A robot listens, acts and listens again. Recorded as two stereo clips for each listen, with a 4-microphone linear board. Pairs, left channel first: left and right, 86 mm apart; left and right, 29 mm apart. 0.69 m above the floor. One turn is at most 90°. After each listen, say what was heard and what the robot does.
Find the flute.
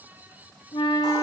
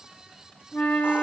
Turn 90° left.
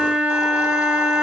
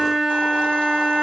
So it is at 10° right. Turn 10° right.
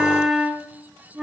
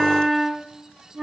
Facing the flute, 1 to 2 m away.